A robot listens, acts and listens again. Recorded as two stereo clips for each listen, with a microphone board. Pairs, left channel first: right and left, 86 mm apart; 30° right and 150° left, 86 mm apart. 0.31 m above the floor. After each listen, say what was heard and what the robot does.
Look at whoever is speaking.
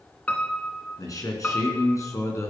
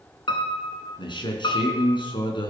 The man speaking: 40° right. Turn 40° right.
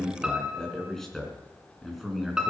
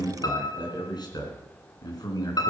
Found it: a man speaking, straight ahead, 2 to 4 m away.